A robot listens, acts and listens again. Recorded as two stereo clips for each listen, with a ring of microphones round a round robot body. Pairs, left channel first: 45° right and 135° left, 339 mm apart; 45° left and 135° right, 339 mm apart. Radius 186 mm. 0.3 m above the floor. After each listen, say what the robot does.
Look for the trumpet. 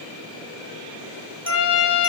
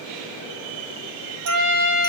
Turn 95° right.
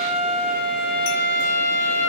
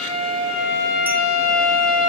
Facing the trumpet.